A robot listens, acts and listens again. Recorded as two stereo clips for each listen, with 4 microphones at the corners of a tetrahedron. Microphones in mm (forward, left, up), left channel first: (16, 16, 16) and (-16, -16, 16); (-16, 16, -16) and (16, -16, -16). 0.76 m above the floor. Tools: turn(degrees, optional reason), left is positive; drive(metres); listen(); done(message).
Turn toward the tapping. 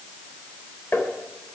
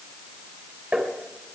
turn(degrees=15, reason="The tapping: 15° left.")
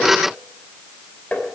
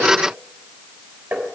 done("Found it: tapping, straight ahead.")